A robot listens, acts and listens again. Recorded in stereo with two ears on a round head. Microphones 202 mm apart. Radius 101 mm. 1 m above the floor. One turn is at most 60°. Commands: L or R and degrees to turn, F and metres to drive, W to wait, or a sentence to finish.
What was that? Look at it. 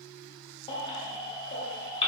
L25
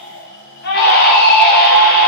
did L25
L60
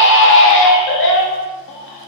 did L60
L60
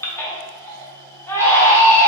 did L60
L15
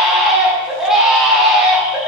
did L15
Facing the baby crying.